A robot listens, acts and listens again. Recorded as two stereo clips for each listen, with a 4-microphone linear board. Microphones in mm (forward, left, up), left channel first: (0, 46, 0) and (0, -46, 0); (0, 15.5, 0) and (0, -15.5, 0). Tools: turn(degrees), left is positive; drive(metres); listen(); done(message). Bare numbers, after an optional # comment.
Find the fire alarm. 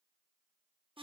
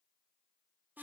listen()
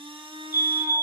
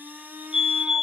# The fire alarm: about 25° right or 155° right.
turn(-25)
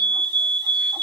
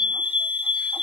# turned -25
# So it is at 125° right.
turn(-125)
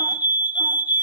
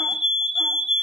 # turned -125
# The fire alarm is now 20° right.
turn(-20)
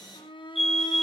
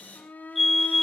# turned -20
done("Found it: a fire alarm, straight ahead.")